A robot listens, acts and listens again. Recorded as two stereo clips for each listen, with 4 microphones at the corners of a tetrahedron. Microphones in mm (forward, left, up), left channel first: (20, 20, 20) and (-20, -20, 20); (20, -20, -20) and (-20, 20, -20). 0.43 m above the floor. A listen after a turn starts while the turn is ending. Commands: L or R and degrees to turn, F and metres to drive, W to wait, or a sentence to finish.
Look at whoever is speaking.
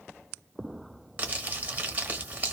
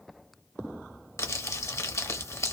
W
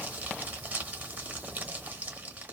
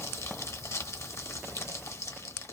W
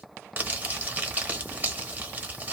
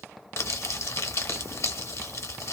I can't make out anyone speaking to turn to.